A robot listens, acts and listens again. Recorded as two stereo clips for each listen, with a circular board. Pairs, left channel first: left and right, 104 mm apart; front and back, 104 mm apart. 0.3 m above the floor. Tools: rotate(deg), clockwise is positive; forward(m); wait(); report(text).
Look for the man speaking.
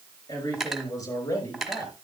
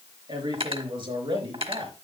rotate(-145)
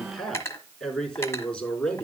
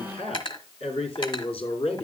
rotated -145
rotate(-10)
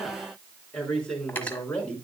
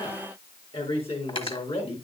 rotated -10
rotate(-10)
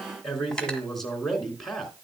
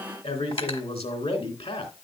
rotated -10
report("Facing the man speaking.")